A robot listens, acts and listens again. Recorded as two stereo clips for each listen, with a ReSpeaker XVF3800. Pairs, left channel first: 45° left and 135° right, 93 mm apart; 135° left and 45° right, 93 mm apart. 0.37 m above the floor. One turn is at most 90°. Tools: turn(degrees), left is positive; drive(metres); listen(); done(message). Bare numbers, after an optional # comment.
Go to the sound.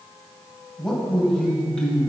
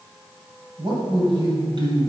# The man speaking: 35° right.
turn(-35)
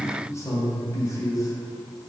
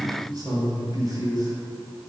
drive(1.0)
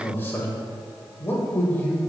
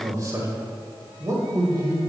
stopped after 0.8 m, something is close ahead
# The man speaking is now 10° right.
turn(-10)
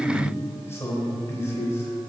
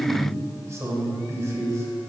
done("Arrived at the man speaking, straight ahead.")